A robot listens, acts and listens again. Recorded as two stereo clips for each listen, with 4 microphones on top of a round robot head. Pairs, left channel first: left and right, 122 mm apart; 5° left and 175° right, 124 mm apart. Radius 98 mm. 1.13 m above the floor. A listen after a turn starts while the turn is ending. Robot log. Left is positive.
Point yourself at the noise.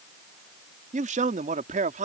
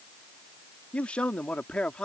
note: The man speaking: 80° right.
cmd yaw -80
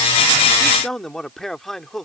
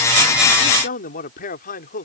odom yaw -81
end: Facing the man speaking.